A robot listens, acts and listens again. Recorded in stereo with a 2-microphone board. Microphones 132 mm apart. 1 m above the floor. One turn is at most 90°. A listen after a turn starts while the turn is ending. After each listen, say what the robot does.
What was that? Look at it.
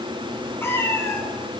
Turn 20° left.
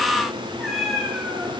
Turn 30° left.
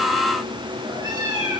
Turn 30° right.
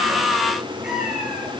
Facing the cat meowing, over 4 m away.